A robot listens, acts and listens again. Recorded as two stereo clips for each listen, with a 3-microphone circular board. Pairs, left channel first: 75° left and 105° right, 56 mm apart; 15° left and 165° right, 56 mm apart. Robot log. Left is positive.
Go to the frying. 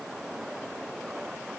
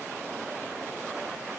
cmd idle
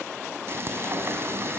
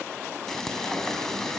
note: The frying: 65° right.
cmd yaw -65
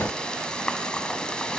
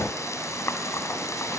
cmd fwd 1.0
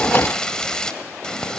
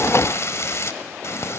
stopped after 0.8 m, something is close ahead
end: Arrived at the frying, straight ahead.